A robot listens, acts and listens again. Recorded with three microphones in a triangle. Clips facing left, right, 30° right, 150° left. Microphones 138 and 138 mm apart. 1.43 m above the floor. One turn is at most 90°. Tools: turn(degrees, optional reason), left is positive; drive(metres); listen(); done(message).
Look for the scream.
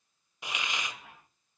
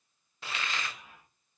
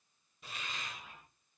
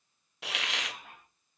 listen()
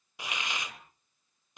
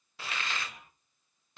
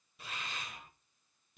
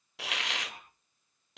listen()
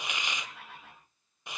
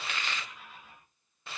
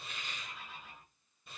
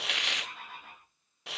done("I can't make out a scream to turn to.")